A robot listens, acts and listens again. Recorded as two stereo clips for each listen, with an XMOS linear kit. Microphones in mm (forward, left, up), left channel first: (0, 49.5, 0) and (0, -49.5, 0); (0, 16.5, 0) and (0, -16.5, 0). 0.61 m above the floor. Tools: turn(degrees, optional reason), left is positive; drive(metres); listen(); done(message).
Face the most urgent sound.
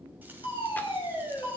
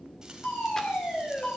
turn(degrees=60, reason="The fire alarm: about 60° left or 120° left.")
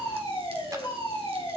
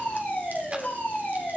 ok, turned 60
turn(degrees=55, reason="So it is at 55° left.")
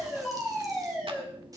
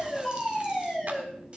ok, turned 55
turn(degrees=-10, reason="The fire alarm is now 10° right.")
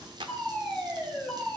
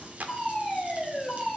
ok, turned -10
done("Facing the fire alarm.")